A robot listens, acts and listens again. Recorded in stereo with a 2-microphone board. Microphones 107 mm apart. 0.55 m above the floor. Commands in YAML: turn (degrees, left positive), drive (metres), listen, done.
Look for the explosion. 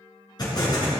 turn: 40
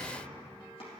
listen: true
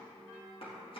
done: "I heard an explosion, but can't make it out now. It was about straight ahead or 100° left."